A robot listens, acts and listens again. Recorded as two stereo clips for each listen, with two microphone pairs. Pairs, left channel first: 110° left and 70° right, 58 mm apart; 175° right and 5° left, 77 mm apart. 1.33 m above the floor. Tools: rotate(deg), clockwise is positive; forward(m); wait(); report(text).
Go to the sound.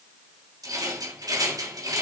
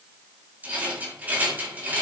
rotate(65)
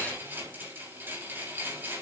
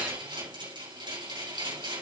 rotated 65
rotate(15)
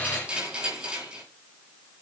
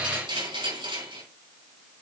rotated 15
forward(1.0)
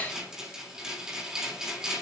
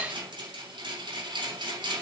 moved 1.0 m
rotate(-10)
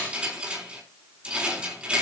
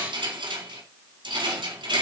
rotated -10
forward(1.0)
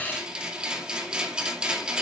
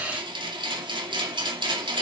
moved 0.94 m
forward(1.0)
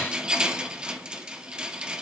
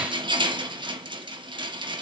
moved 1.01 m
forward(1.0)
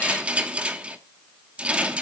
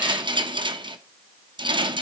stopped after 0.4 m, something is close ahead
report("Arrived at the rattle, straight ahead.")